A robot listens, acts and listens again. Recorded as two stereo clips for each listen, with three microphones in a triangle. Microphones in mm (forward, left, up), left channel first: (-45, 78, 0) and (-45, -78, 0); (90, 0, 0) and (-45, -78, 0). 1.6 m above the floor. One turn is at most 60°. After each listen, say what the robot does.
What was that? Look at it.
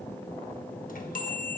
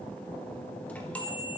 Turn 60° left.
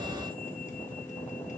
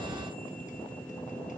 Turn 50° left.
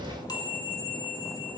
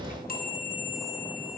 Turn 30° left.
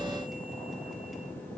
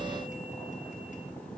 Keep listening.
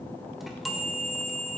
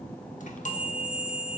Found it: a chime, straight ahead, 1 to 2 m away.